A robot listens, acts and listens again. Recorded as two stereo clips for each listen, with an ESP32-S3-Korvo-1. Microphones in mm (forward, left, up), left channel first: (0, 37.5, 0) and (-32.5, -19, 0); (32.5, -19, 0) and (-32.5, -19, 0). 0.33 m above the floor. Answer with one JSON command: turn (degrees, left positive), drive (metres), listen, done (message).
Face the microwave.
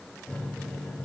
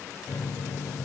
{"turn": -10}
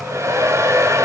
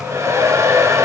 {"listen": true}
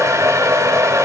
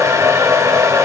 {"listen": true}
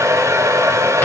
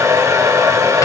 {"done": "I heard a microwave from this way, but can't make it out now."}